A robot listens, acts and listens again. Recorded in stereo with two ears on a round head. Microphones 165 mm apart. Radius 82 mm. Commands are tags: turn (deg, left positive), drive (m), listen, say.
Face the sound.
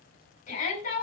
<turn deg="45"/>
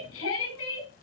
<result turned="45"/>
<turn deg="90"/>
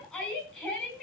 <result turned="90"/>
<say>Facing the shout.</say>